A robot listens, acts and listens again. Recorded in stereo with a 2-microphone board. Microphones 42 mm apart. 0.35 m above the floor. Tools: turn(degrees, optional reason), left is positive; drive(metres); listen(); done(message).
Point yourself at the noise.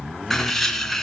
turn(degrees=30)
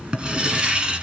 turn(degrees=-20, reason="So it is at 20° right.")
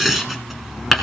done("Found it: writing, straight ahead.")